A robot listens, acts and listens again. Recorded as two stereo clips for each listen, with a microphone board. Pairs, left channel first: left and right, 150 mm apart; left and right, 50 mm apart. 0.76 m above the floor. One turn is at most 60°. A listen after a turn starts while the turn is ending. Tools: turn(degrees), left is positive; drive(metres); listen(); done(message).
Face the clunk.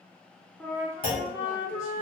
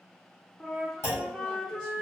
turn(degrees=60)
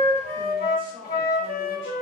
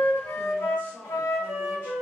listen()
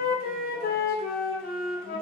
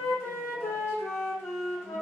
done("I heard a clunk, but can't make it out now. It was about 5° left or 55° left.")